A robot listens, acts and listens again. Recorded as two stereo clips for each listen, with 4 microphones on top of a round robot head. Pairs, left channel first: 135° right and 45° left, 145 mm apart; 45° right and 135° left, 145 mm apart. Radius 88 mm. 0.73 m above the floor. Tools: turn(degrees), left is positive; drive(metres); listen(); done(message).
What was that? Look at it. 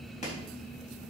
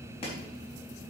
turn(degrees=-95)
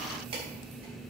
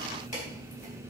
listen()
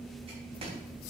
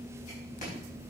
listen()
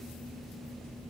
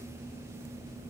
done("Facing where the chopping came from. I can't hear it now.")